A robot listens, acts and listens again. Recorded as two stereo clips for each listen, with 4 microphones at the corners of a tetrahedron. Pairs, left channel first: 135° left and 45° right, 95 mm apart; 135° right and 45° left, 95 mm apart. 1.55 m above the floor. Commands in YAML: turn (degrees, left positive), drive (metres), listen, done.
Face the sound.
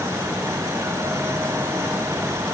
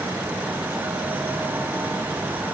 listen: true
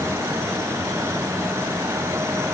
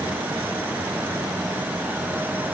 listen: true
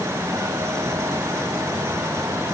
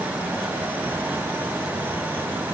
done: "I can't make out anything."